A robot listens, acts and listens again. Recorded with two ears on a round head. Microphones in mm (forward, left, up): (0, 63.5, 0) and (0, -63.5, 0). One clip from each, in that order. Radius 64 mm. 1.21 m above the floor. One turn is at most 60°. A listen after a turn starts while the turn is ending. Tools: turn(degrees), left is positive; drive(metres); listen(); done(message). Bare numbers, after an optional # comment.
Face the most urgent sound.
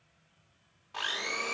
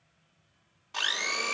listen()
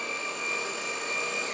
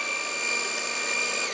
listen()
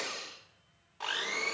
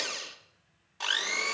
done("I can't make out anything urgent, only a blender.")